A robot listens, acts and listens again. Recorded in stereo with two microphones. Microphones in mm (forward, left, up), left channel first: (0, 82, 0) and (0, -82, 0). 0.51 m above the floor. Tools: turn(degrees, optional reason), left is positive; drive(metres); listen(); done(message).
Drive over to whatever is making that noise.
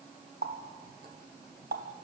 turn(degrees=-75, reason="The running tap: about 75° right or 105° right.")
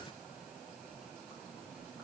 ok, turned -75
listen()
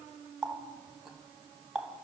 drive(metres=1.0)
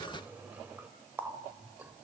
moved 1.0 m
turn(degrees=-10, reason="The running tap is now 10° right.")
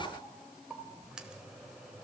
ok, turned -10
drive(metres=1.0)
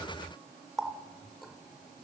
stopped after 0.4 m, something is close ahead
done("Arrived at the running tap, straight ahead.")